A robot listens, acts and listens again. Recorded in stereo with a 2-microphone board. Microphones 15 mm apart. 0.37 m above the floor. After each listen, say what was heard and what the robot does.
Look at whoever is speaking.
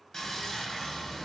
Keep listening.
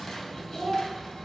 The child speaking: about 55° left or 125° left. Turn 55° left.
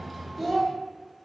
Found it: a child speaking, straight ahead.